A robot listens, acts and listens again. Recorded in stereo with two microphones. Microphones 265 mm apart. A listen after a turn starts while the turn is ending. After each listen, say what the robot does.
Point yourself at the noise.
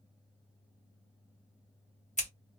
Turn 25° left.
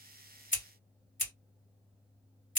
Turn 125° left.
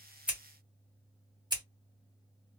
Turn 20° right.
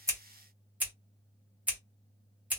Found it: scissors, straight ahead, 1 to 2 m away.